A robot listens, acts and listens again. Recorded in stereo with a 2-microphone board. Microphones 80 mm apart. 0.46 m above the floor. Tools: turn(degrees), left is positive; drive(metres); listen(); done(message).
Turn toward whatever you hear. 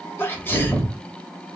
turn(degrees=25)
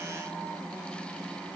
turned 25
listen()
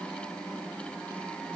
done("I heard a sneeze, but can't make it out now. It was about straight ahead or 130° left.")